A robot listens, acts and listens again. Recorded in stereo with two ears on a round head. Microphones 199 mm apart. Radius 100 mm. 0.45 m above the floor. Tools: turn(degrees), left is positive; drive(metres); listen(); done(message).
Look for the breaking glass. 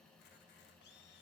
listen()
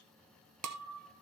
turn(degrees=-90)
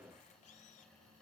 done("Facing where the breaking glass came from. I can't hear it now.")